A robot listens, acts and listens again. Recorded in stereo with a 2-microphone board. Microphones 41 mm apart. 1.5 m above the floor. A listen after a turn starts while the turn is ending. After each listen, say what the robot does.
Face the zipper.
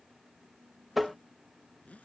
Turn 35° left.
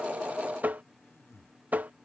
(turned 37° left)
Turn 105° left.
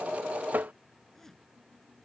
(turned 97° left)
Turn 10° left.
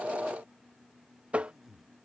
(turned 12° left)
Facing the zipper.